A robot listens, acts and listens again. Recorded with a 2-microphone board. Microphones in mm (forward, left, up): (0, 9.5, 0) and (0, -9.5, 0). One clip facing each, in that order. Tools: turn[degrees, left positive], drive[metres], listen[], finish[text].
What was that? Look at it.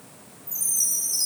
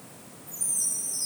Action: turn[90]
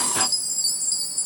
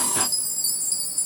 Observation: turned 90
Thought: So it is at 15° left.
Action: turn[15]
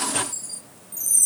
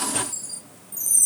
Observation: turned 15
Action: finish[Found it: a chime, straight ahead.]